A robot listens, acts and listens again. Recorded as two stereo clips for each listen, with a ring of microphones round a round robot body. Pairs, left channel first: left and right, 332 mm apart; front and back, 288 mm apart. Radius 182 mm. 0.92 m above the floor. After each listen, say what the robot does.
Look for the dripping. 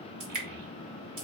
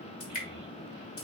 Turn 60° right.
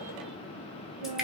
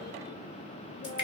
Facing the dripping, 2 to 4 m away.